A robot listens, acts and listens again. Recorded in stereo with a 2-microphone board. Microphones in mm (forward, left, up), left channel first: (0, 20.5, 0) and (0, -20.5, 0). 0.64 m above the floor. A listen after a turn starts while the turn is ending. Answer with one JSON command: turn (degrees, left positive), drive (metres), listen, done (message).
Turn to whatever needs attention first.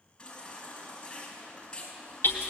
{"turn": 15}
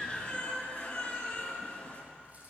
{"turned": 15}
{"turn": 145}
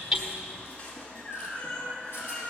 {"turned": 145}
{"turn": 35}
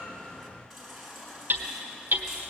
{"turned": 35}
{"done": "Facing the baby crying, over 4 m away."}